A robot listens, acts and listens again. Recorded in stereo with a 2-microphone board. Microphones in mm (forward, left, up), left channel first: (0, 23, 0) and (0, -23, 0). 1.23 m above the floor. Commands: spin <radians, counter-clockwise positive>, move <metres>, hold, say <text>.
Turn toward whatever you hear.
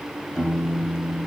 spin 0.52
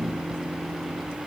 hold
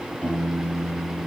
spin 2.62
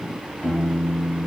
spin 0.44
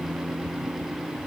say Facing the piano.